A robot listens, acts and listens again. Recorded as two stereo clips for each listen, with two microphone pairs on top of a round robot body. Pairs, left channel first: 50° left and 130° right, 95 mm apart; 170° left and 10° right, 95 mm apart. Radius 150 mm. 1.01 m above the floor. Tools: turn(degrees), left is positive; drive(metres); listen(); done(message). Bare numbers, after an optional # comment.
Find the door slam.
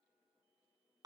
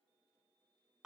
listen()
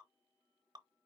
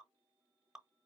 listen()
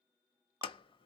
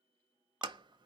# The door slam: 25° left.
turn(25)
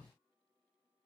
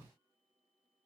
done("I heard a door slam from this way, but can't make it out now.")